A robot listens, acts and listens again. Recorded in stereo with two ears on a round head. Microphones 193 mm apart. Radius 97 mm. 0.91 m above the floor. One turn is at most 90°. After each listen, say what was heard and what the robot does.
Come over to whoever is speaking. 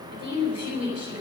The woman speaking: about 30° right or 150° right. Turn 30° right.
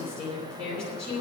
Drive 1.0 m forward.
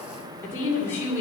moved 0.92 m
The woman speaking is now 10° left. Turn 10° left.
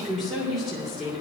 Drive 1.0 m forward.
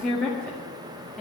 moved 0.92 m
Drive 1.0 m forward.
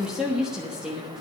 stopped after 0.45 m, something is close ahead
Arrived at the woman speaking, straight ahead.